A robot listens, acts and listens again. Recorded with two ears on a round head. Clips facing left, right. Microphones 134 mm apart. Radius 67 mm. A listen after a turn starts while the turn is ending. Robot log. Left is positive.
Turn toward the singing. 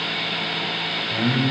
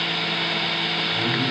note: The singing: about 45° left or 135° left.
cmd yaw +45
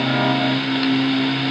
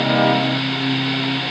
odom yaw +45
note: So it is at 85° left.
cmd yaw +85
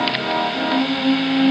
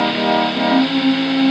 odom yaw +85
end: Facing the singing, over 4 m away.